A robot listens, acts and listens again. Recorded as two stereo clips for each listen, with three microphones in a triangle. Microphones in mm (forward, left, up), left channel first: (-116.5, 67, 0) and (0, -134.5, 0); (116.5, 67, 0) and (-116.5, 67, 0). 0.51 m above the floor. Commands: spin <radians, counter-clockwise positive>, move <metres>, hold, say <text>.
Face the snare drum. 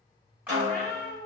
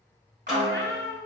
spin -1.66
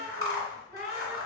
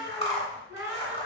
hold
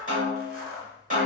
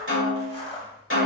spin -0.17
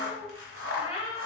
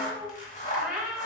hold
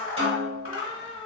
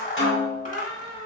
say Facing the snare drum.